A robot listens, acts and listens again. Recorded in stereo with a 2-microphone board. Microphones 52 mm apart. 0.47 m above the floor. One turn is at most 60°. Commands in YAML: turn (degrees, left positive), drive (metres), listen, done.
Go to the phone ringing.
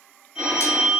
turn: -30
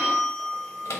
turn: 15
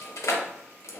listen: true
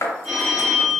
drive: 1.0
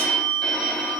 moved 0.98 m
turn: 10
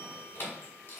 listen: true
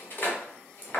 listen: true
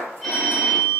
drive: 1.0
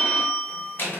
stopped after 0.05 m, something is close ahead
done: "I am next to the phone ringing."